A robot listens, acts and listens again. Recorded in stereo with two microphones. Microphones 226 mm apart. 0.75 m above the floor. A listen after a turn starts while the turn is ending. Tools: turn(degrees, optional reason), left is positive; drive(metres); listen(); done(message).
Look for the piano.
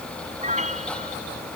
turn(degrees=-30, reason="The piano: about 30° right or 150° right.")
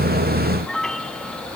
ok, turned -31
done("Found it: a piano, straight ahead.")